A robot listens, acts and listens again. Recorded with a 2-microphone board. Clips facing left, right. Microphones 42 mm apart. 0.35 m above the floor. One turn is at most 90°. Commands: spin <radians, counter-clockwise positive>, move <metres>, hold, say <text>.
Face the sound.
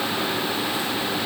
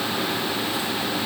hold
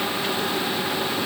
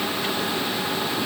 hold
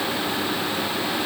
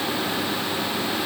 say I can't make out anything to turn to.